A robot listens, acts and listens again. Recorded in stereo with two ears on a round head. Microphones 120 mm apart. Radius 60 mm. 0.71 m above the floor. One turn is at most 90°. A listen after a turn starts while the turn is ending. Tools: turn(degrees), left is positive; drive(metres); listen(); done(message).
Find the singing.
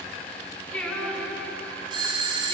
turn(degrees=30)
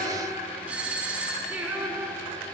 done("Found it: singing, straight ahead, over 4 m away.")